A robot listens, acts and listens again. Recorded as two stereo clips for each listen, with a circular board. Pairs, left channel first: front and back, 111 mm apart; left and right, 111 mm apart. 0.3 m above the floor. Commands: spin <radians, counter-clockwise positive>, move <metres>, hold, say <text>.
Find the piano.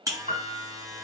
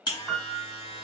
spin 2.79
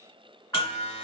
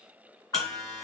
spin 0.70
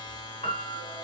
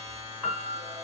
say Found it: a piano, straight ahead, 1 to 2 m away.